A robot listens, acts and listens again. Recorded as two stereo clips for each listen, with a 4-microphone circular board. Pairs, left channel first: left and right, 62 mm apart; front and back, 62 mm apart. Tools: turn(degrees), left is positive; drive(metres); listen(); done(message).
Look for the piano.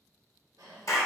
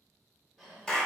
listen()
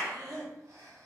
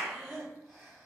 listen()
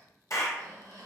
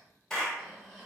done("I can't make out a piano to turn to.")